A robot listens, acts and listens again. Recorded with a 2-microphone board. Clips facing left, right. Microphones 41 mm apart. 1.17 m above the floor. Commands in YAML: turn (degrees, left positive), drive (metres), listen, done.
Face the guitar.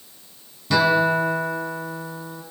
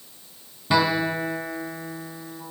turn: -20
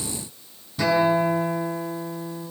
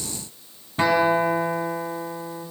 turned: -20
turn: -140
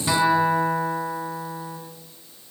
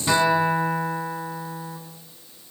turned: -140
done: "Found it: a guitar, straight ahead, over 4 m away."